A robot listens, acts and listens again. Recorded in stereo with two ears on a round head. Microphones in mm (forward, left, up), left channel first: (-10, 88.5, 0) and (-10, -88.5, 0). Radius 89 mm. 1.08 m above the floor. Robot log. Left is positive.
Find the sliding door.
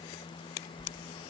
note: The sliding door: about 35° right or 145° right.
cmd yaw -35
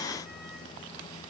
cmd idle
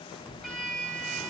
end: Facing the sliding door.